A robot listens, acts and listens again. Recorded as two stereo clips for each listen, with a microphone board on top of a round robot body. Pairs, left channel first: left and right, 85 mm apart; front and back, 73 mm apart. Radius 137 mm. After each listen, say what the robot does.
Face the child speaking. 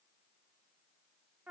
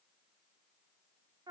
Keep listening.
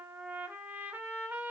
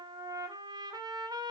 Keep listening.
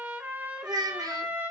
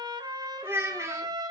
Turn 125° right.
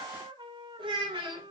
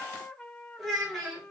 Turn 100° right.
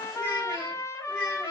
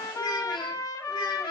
Found it: a child speaking, straight ahead, 1 to 2 m away.